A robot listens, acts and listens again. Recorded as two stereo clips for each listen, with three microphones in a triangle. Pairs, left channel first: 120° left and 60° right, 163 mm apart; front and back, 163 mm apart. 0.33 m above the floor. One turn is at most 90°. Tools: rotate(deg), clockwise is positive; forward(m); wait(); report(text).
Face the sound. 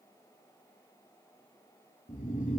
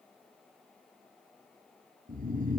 rotate(-90)
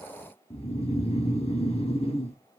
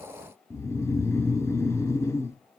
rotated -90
rotate(-70)
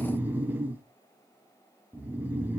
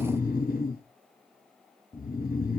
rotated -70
rotate(-15)
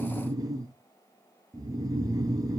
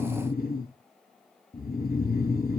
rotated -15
report("Facing the snoring.")